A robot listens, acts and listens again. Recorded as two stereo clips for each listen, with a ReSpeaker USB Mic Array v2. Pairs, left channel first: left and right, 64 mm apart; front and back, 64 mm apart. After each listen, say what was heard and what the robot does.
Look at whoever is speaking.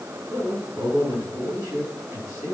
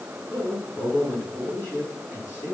The man speaking: 55° right. Turn 55° right.
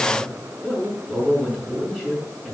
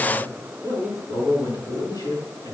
The man speaking is now 10° right. Turn 10° right.
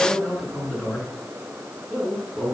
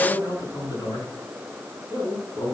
Found it: a man speaking, straight ahead.